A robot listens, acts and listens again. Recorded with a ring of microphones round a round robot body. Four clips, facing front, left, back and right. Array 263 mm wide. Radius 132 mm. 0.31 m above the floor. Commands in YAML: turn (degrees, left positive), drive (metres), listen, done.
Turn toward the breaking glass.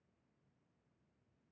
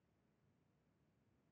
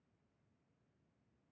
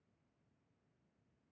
listen: true
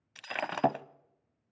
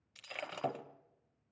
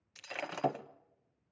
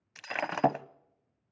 turn: -60
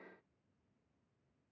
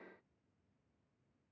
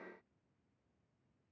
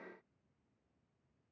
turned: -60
done: "Facing where the breaking glass came from. I can't hear it now."